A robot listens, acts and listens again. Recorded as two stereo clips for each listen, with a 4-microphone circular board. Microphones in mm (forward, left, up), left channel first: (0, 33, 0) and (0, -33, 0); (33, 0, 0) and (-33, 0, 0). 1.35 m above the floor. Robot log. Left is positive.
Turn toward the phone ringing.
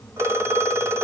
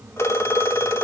note: The phone ringing: 50° right.
cmd yaw -50
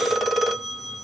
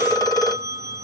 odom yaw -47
end: Facing the phone ringing, 2 to 4 m away.